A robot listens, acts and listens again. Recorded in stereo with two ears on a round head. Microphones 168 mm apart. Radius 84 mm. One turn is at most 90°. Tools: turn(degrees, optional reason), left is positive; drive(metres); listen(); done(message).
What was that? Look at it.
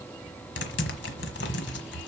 turn(degrees=65, reason="The typing on a keyboard: about 65° left or 115° left.")
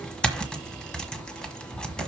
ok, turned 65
done("Facing the typing on a keyboard, 1 to 2 m away.")